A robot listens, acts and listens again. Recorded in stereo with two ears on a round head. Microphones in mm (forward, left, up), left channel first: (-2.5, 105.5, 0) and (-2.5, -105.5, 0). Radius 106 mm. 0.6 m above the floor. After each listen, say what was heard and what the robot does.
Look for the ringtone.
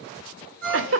The ringtone: about 65° right or 115° right. Turn 65° right.
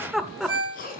So it is at 50° right. Turn 50° right.
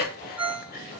Found it: a ringtone, straight ahead.